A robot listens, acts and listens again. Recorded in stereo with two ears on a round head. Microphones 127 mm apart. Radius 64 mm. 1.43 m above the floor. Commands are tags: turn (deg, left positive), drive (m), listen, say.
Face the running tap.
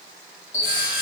<turn deg="20"/>
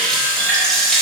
<say>Found it: a running tap, straight ahead, 1 to 2 m away.</say>